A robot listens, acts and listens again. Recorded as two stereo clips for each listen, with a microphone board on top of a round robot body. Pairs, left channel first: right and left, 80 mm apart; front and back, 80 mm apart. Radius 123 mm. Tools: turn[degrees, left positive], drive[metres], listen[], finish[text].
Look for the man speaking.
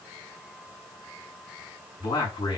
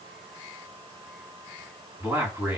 Thought: The man speaking: 110° right.
Action: turn[-110]
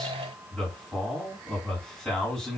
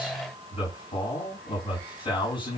Action: finish[Found it: a man speaking, straight ahead.]